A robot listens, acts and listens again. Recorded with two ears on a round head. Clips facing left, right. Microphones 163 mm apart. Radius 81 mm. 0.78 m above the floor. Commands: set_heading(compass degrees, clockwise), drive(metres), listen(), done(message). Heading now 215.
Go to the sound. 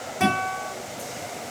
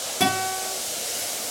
set_heading(260)
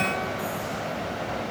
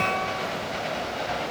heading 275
set_heading(260)
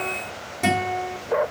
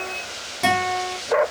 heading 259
drive(1.0)
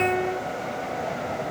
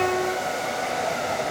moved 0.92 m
drive(1.0)
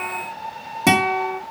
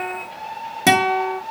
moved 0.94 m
set_heading(274)
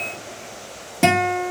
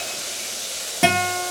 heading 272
drive(1.0)
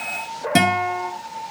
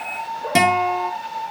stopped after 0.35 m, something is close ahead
done("I am next to the guitar.")